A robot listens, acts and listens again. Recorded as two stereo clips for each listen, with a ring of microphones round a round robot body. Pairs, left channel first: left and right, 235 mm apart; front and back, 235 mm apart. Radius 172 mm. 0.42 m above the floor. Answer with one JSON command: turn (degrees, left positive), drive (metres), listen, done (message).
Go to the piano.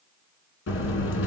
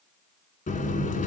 {"listen": true}
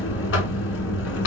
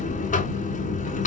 {"listen": true}
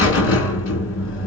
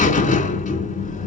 {"done": "I can't make out a piano, only a buzzer."}